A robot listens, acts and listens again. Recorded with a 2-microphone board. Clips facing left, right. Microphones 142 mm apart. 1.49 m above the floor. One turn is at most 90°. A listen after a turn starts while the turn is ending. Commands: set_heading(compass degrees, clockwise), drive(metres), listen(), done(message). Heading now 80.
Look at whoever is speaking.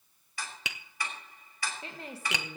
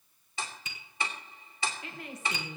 set_heading(50)
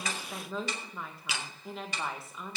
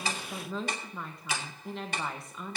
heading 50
done("Facing the woman speaking, 1 to 2 m away.")